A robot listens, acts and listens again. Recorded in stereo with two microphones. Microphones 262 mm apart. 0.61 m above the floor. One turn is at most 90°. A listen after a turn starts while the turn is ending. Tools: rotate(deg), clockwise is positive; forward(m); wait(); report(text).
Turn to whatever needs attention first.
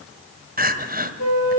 rotate(35)
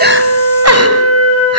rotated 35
rotate(90)
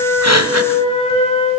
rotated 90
rotate(20)
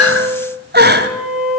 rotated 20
rotate(40)
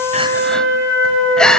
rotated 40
report("Found it: crying, straight ahead.")